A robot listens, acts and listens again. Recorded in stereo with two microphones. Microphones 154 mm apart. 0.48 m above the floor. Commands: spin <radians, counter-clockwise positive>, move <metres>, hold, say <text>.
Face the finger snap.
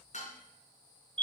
hold
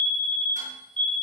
hold
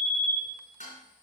say I can't make out a finger snap, only a fire alarm and dishes clattering.